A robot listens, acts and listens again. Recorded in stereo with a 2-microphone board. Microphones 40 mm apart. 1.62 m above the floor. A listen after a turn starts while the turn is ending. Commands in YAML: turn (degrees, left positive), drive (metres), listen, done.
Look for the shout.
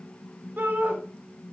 turn: -60
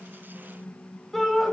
done: "Facing the shout."